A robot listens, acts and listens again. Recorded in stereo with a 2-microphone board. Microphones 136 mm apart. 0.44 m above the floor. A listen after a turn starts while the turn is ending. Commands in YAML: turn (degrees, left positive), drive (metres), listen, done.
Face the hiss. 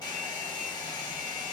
listen: true
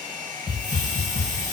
turn: 20
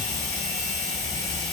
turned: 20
done: "Facing the hiss."